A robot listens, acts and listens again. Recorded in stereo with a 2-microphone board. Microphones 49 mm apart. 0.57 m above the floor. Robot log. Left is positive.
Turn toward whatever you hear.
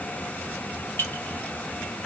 note: The clink: about 50° left or 130° left.
cmd yaw +50
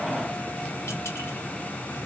cmd idle
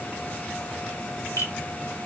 note: So it is at 80° left.
cmd yaw +80
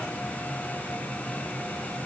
cmd idle
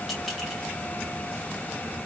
cmd idle
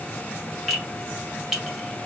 end: Found it: a clink, straight ahead, 1 to 2 m away.